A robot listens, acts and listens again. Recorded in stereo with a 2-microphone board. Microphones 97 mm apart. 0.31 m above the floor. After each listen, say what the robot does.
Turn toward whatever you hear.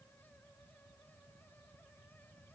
Keep listening.
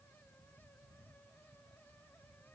Keep listening.
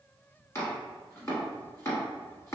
Turn 30° left.
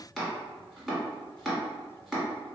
Facing the chopping.